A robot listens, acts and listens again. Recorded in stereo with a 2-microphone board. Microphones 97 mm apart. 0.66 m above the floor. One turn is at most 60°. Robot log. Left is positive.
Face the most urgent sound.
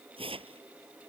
cmd idle
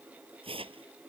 cmd idle
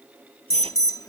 note: The alarm: about 35° left or 145° left.
cmd yaw +35
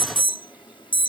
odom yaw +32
note: So it is at 100° left.
cmd yaw +60
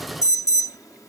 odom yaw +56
note: The alarm is now 45° left.
cmd yaw +45
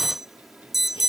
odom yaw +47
end: Found it: an alarm, straight ahead.